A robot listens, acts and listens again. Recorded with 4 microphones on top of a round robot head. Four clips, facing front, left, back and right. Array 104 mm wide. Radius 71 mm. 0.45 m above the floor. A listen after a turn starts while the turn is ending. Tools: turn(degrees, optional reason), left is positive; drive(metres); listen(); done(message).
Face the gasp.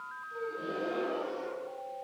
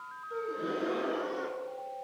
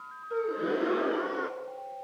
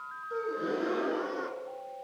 turn(degrees=-165, reason="The gasp: 165° right.")
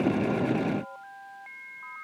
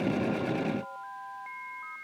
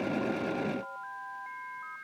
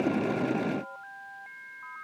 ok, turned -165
done("I heard a gasp from this way, but can't make it out now.")